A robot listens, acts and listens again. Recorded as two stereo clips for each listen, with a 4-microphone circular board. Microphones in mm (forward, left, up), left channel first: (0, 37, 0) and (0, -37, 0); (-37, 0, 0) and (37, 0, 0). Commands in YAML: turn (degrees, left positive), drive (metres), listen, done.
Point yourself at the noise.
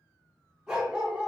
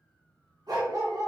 turn: -20
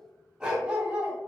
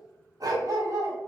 turn: -25
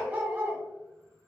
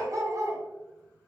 turn: -35
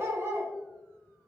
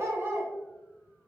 turn: -55
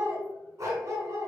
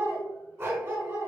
turn: -55
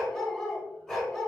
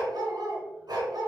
done: "Found it: a dog barking, straight ahead, 1 to 2 m away."